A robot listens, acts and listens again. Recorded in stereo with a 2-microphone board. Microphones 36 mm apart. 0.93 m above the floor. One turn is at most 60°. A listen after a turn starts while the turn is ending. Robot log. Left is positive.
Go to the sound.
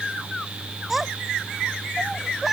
cmd yaw -30
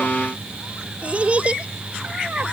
note: So it is at 145° right.
cmd yaw -60
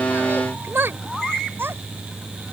note: The child speaking is now 110° right.
cmd yaw -60
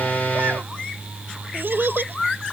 note: The child speaking is now 60° right.
cmd yaw -60
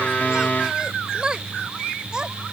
note: The child speaking is now 20° right.
cmd yaw -20
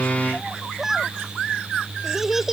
note: The child speaking is now 10° right.
cmd yaw -10
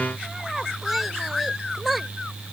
cmd fwd 1.0
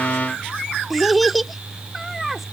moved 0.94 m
cmd fwd 1.0
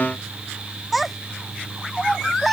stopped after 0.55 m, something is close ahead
end: Arrived at the child speaking, straight ahead.